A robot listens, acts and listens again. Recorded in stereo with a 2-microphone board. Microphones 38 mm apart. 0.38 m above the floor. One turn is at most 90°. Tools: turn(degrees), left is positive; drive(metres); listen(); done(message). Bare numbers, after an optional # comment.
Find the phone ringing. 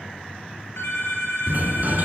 # The phone ringing: about 75° left or 105° left.
turn(75)
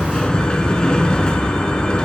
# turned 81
listen()
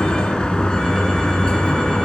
listen()
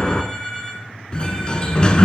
# So it is at 25° left.
turn(25)
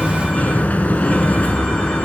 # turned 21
listen()
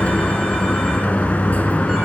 listen()
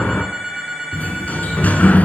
done("Found it: a phone ringing, straight ahead, over 4 m away.")